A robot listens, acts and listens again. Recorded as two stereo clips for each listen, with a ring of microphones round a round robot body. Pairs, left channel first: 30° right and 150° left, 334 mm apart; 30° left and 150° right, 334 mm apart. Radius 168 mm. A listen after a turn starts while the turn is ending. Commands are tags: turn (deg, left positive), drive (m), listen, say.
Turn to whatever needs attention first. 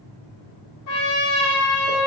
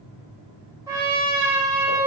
<listen/>
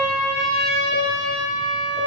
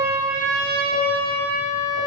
<listen/>
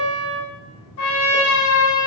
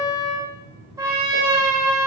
<say>I can't make out anything urgent to turn to.</say>